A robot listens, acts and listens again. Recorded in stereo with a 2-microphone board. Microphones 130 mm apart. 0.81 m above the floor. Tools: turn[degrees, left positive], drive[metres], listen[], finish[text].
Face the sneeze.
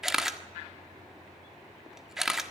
Action: listen[]
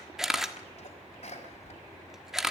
Thought: The sneeze: about 55° left or 125° left.
Action: turn[55]
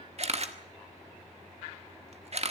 Action: listen[]
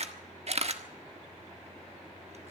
Action: finish[I heard a sneeze, but can't make it out now. It was about straight ahead or 70° left.]